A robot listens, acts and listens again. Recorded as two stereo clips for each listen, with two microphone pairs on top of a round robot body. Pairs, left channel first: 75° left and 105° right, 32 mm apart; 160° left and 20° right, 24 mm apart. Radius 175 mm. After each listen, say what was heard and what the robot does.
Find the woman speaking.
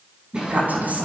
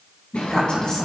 The woman speaking: 140° right. Turn 140° right.
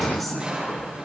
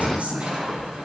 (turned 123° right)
The woman speaking is now 15° right. Turn 15° right.
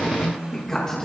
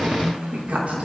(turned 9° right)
Facing the woman speaking.